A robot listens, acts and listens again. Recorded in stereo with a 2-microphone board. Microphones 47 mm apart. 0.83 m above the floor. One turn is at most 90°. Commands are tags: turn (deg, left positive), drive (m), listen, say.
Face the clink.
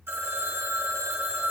<listen/>
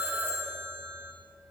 <listen/>
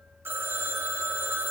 <say>I can't make out a clink to turn to.</say>